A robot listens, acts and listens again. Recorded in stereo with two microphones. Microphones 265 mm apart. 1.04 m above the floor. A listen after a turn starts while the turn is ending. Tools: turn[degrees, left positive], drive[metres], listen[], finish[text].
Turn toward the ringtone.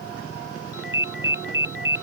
Thought: The ringtone: about 45° right or 135° right.
Action: turn[-45]
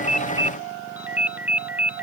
Action: finish[Found it: a ringtone, straight ahead.]